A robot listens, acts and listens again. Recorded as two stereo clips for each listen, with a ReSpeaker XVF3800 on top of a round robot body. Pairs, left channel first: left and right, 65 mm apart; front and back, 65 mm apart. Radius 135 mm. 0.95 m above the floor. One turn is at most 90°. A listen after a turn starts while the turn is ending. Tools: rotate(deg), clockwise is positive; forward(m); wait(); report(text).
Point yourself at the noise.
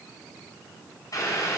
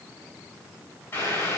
rotate(-55)
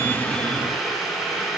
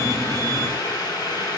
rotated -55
report("Found it: boiling, straight ahead.")